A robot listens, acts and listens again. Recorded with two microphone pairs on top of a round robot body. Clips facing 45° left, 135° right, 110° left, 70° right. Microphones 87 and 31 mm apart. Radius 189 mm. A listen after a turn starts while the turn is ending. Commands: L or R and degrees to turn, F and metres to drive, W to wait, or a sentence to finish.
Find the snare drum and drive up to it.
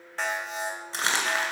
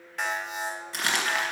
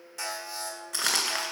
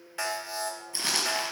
W
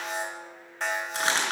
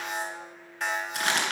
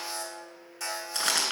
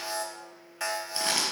W
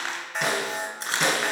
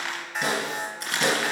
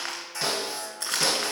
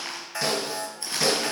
L35
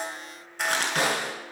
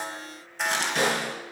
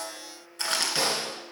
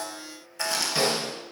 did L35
F1.0
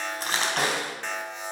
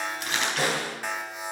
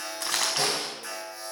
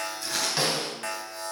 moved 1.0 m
F1.0
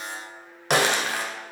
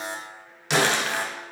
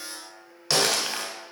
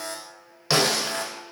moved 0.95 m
L10
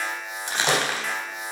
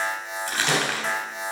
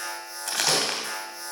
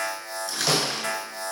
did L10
F1.0
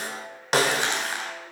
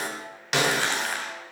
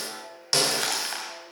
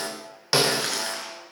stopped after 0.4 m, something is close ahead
I am next to the snare drum.